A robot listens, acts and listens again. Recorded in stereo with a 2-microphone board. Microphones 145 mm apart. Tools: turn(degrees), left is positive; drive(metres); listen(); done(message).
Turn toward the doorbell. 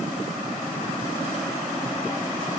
listen()
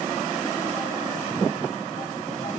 listen()
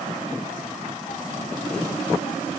done("I can't make out a doorbell to turn to.")